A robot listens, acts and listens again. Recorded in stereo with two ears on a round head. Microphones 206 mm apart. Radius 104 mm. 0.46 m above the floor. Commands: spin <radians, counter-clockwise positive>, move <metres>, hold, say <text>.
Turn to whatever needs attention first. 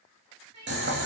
spin -1.57
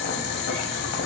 hold
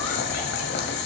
hold
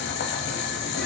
say Facing where the crying came from. I can't hear it now.